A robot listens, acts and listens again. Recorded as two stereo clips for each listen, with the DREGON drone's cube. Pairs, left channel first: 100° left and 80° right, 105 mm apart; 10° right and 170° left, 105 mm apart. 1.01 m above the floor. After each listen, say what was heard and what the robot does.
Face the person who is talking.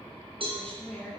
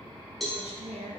The woman speaking: straight behind. Turn 180° left.
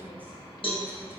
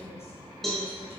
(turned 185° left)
Keep listening.
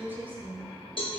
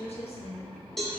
Facing the woman speaking.